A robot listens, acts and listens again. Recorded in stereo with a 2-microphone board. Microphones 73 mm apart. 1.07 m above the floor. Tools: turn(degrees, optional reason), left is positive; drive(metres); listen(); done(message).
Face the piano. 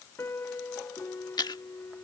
turn(degrees=35, reason="The piano: about 35° left or 145° left.")
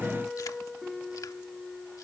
done("Found it: a piano, straight ahead.")